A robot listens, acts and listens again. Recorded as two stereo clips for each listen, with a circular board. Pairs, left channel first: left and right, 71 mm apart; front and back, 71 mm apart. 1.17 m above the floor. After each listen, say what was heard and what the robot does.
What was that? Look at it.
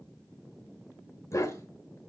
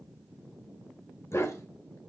The dog barking: 45° left. Turn 45° left.
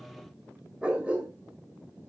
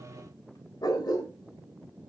The dog barking is now 20° right. Turn 20° right.
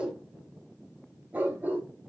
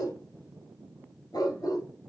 The dog barking is now 30° right. Turn 30° right.
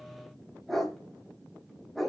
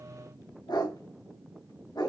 Facing the dog barking, 2 to 4 m away.